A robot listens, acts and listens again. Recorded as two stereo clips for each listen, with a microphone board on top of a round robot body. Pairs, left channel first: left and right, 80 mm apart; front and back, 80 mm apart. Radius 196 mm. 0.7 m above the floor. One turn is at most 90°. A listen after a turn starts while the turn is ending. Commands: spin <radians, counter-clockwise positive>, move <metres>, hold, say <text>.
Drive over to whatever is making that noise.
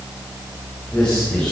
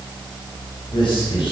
spin 0.17
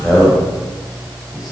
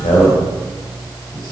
move 1.0
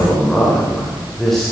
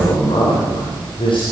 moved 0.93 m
move 1.0
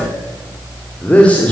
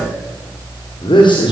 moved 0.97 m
spin 0.26
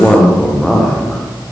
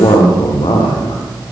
move 1.0
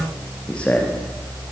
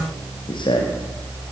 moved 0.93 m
spin 0.26
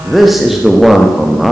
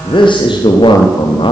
move 1.0
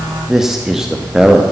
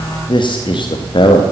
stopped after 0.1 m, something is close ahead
say Arrived at the man speaking, straight ahead.